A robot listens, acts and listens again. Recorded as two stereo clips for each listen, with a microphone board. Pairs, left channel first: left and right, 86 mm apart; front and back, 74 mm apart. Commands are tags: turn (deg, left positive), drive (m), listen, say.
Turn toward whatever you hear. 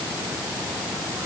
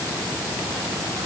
<listen/>
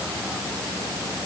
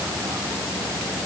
<listen/>
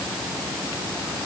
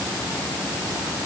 <say>I can't make out anything to turn to.</say>